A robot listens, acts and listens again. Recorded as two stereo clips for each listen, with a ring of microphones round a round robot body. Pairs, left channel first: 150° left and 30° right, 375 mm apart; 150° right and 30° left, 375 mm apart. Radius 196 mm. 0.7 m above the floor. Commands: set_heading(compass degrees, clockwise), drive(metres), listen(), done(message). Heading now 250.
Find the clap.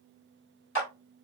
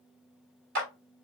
set_heading(160)
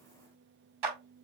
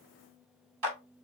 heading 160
set_heading(170)
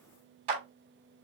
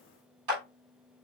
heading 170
done("Facing the clap, 2 to 4 m away.")